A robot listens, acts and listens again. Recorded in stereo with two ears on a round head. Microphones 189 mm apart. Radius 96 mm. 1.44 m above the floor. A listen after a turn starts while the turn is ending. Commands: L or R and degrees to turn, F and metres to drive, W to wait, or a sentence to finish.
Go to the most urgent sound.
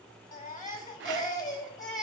L45
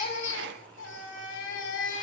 L85
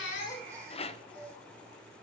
R20
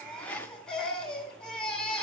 F1.0
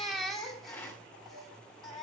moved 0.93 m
F1.0
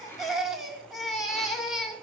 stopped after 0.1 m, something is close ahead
Arrived at the baby crying, straight ahead.